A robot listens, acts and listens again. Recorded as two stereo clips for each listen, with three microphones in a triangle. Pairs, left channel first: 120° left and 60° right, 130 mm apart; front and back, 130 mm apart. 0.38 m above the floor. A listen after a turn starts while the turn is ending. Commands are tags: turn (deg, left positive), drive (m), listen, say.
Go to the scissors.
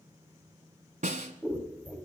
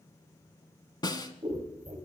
<turn deg="-165"/>
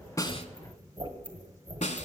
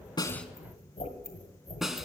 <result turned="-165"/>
<turn deg="-15"/>
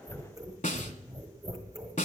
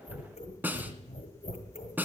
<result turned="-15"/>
<drive m="1.0"/>
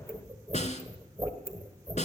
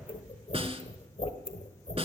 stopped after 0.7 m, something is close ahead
<say>I am next to the scissors.</say>